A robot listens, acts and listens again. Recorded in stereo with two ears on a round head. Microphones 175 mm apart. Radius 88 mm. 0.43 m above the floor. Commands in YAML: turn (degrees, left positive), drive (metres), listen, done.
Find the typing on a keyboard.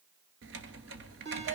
turn: -65
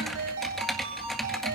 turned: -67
done: "Facing the typing on a keyboard, 1 to 2 m away."